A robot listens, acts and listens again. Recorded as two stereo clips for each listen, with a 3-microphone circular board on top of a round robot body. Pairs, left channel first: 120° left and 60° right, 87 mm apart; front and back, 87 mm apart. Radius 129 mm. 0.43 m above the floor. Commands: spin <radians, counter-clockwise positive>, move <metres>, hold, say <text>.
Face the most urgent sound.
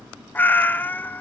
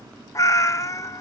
hold
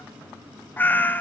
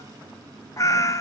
hold
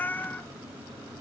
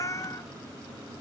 say I can't make out anything urgent to turn to.